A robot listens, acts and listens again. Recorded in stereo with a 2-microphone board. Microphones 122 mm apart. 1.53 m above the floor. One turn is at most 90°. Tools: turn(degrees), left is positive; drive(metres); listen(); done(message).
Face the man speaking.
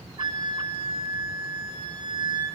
listen()
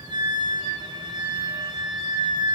listen()
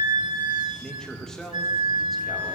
turn(degrees=30)
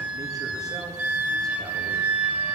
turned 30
listen()
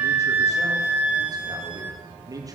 turn(degrees=-30)
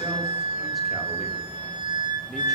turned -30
listen()
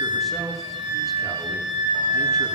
listen()
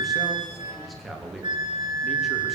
done("Found it: a man speaking, straight ahead.")